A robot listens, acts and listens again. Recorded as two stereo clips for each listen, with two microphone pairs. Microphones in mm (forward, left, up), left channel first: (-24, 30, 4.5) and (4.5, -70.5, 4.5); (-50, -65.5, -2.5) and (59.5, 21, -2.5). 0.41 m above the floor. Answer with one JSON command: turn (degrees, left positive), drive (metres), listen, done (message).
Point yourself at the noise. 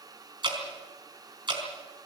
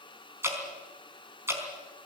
{"turn": -35}
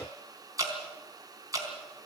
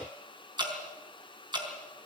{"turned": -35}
{"turn": -20}
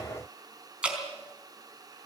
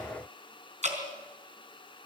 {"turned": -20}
{"done": "Found it: dripping, straight ahead, over 4 m away."}